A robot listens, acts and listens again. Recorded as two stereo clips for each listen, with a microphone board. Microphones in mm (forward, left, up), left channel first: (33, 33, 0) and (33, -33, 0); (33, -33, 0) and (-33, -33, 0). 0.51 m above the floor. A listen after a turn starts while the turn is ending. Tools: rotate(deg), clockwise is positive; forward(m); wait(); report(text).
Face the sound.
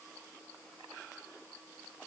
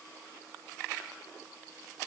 wait()
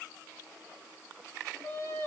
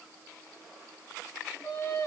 rotate(-45)
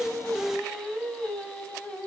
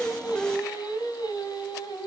rotate(-15)
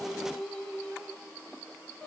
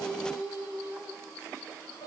rotate(-15)
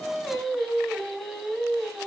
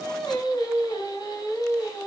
report("Found it: singing, straight ahead.")